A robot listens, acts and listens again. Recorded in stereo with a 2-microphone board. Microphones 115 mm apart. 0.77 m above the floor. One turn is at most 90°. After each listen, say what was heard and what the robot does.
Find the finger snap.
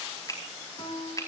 The finger snap: about 35° left or 145° left. Turn 35° left.
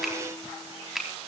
Found it: a finger snap, straight ahead.